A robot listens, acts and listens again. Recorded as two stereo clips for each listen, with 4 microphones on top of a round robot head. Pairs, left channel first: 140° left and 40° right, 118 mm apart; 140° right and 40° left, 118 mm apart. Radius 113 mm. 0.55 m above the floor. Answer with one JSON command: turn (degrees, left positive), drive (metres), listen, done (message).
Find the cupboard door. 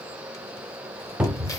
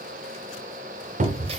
{"turn": 45}
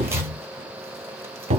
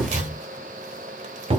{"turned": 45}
{"done": "Found it: a cupboard door, straight ahead."}